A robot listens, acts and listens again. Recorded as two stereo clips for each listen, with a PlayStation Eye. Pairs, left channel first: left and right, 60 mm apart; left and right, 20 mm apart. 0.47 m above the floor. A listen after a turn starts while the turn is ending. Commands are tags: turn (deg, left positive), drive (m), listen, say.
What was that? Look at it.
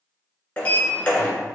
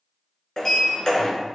<turn deg="20"/>
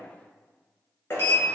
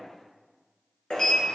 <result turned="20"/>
<turn deg="140"/>
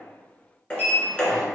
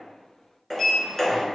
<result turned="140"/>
<turn deg="20"/>
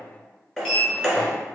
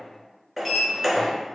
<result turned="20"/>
<say>Facing the sliding door.</say>